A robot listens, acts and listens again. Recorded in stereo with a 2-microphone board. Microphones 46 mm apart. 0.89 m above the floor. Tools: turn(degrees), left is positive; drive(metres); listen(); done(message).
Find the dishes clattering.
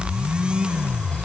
listen()
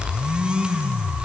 listen()
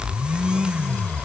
done("I can't make out dishes clattering to turn to.")